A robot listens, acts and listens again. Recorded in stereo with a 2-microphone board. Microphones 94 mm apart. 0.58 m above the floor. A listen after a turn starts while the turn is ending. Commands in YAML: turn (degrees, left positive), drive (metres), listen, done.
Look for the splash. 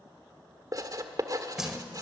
turn: -30
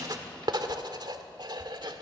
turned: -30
listen: true
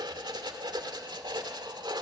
done: "I heard a splash, but can't make it out now. It was about 25° left or 145° right."